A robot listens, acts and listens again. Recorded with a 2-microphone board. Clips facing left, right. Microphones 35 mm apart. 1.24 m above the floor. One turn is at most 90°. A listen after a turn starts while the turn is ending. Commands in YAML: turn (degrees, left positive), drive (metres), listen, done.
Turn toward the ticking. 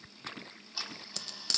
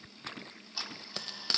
turn: -30
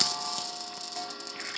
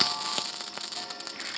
turn: 25
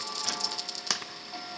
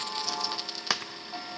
turn: -10
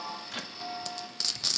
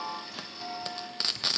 done: "Facing the ticking, 2 to 4 m away."